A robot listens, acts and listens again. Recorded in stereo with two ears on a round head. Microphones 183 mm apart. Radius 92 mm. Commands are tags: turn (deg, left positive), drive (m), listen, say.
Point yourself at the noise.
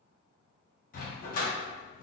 <turn deg="40"/>
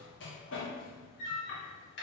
<turn deg="85"/>
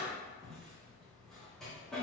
<say>Facing the dog barking.</say>